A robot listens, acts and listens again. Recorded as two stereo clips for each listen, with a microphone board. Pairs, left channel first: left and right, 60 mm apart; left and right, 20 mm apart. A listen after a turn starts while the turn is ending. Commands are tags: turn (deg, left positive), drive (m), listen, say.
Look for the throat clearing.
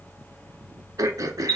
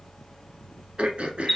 <turn deg="-90"/>
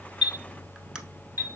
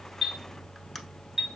<listen/>
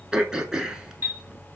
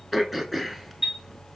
<turn deg="-10"/>
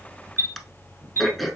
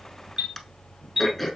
<say>Facing the throat clearing, under 1 m away.</say>